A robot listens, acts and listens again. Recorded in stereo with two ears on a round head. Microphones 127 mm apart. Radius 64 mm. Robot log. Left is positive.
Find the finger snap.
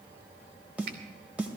cmd yaw -90
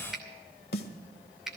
end: Facing the finger snap.